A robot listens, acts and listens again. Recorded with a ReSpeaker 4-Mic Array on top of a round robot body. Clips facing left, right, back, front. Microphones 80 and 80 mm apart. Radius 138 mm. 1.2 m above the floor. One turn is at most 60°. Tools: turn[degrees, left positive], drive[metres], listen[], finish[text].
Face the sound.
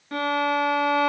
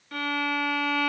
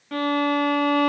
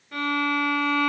Thought: The violin: 150° left.
Action: turn[60]
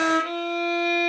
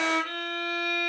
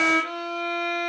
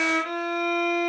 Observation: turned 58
Thought: The violin is now 95° left.
Action: turn[60]
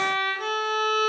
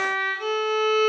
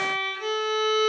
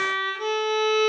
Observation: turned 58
Thought: The violin is now 35° left.
Action: turn[35]
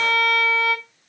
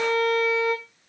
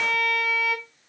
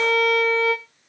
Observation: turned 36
Action: finish[Facing the violin.]